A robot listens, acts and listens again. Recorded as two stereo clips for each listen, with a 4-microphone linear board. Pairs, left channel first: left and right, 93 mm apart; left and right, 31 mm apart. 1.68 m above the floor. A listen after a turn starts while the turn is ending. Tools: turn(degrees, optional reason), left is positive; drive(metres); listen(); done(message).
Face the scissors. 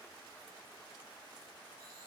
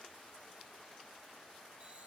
listen()
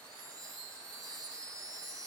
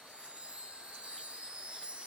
listen()
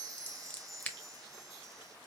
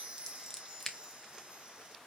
turn(degrees=15, reason="The scissors: about 15° left or 165° left.")
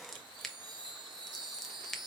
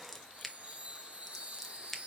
done("Found it: scissors, straight ahead.")